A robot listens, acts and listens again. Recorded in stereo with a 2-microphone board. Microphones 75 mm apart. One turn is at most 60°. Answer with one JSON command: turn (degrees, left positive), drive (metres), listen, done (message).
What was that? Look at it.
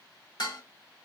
{"turn": 60}
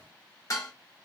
{"turn": 45}
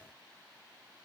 {"listen": true}
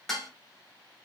{"done": "Facing the dishes clattering, 1 to 2 m away."}